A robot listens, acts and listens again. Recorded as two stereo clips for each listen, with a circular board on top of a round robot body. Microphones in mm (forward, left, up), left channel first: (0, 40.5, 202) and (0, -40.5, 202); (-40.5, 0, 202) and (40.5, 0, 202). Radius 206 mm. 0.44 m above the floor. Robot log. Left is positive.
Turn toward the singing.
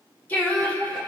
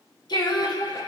note: The singing: 155° left.
cmd yaw +155
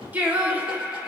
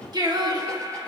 note: The singing is now 30° right.
cmd yaw -30
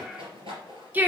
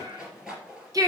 note: The singing is now 30° right.
cmd yaw -30
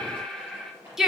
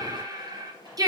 note: The singing is now 10° right.
cmd yaw -10
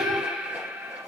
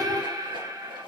note: The singing is now 25° right.
cmd yaw -25
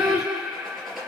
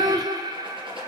note: The singing is now 10° right.
cmd yaw -10
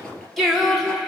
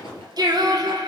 end: Facing the singing, 1 to 2 m away.